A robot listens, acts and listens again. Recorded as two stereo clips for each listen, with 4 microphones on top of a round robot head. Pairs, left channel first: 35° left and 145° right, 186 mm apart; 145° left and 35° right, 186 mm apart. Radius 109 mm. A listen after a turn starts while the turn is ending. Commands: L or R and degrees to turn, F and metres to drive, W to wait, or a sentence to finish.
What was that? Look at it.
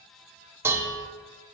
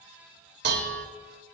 R65
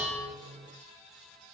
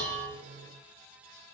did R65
W
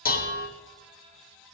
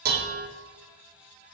Found it: dishes clattering, straight ahead.